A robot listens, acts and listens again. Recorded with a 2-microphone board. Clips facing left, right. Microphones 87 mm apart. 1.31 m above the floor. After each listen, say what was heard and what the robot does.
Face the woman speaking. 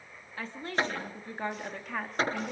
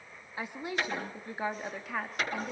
Turn 30° left.
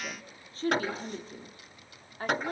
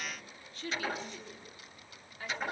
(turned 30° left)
So it is at 135° left. Turn 135° left.
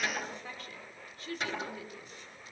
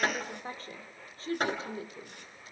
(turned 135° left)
The woman speaking is now 35° right. Turn 35° right.
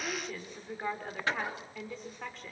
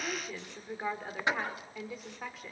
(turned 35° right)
Found it: a woman speaking, straight ahead.